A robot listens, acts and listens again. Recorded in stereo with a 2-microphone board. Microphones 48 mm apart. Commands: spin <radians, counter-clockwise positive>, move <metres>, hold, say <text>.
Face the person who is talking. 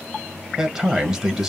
spin -0.26
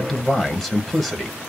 say Facing the man speaking, under 1 m away.